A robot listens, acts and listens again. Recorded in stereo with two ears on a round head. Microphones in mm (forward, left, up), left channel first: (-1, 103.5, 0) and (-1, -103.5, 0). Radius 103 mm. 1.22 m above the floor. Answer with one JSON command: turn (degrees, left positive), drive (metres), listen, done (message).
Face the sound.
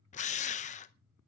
{"turn": 30}
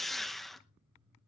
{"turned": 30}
{"done": "Facing the drill."}